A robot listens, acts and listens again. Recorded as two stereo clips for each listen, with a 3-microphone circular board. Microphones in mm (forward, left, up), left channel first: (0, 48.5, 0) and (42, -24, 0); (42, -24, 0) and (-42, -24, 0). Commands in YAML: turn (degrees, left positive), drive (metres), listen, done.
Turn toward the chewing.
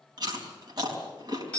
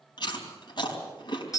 turn: -30
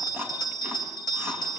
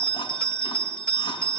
listen: true
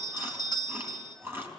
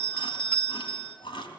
done: "Found it: chewing, straight ahead, 2 to 4 m away."